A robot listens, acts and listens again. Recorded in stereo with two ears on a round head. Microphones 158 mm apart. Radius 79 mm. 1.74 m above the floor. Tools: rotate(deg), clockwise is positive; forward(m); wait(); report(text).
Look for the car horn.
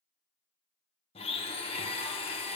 wait()
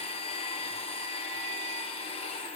wait()
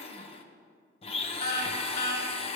rotate(-55)
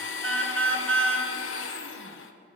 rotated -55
rotate(-10)
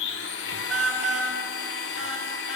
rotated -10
report("Facing the car horn, 2 to 4 m away.")